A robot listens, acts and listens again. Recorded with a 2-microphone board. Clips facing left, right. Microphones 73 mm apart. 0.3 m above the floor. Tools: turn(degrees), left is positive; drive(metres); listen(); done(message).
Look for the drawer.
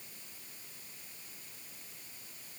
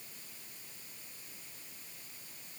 listen()
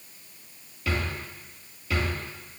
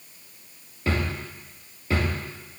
turn(degrees=-35)
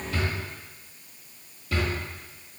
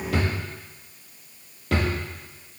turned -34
turn(degrees=-115)
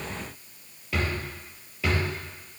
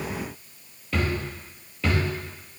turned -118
done("Facing the drawer, 2 to 4 m away.")